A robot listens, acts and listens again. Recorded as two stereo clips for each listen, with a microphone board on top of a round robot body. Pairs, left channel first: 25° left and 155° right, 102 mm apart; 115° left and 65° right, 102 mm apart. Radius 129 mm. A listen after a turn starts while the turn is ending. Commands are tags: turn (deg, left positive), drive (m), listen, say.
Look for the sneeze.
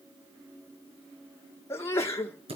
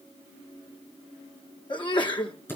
<turn deg="85"/>
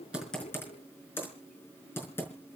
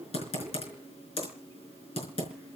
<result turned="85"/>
<say>Facing where the sneeze came from. I can't hear it now.</say>